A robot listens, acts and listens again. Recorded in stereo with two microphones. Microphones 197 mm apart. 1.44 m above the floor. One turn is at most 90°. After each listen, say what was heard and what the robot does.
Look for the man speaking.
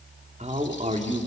The man speaking: about 35° right or 145° right. Turn 35° right.
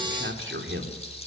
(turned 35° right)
So it is at 105° right. Turn 90° right.
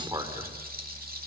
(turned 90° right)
The man speaking is now 20° right. Turn 20° right.
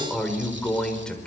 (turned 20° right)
Found it: a man speaking, straight ahead.